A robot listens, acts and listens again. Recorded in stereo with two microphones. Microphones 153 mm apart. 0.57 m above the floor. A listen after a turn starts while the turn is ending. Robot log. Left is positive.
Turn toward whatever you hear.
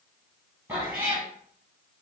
note: The cat meowing: about 15° right or 165° right.
cmd yaw -15
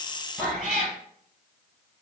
end: Found it: a cat meowing, straight ahead.